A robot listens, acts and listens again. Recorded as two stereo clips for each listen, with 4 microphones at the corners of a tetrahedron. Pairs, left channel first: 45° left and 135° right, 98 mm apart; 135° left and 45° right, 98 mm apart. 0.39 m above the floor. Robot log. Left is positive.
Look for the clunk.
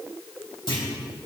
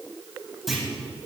note: The clunk: 45° left.
cmd yaw +45
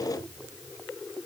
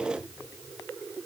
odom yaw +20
note: Nothing new. It was at 25° left.
cmd yaw +25
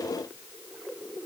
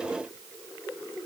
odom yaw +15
note: Nothing new. It was at 10° left.
cmd yaw +10
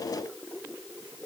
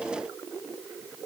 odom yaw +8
end: Facing where the clunk came from. I can't hear it now.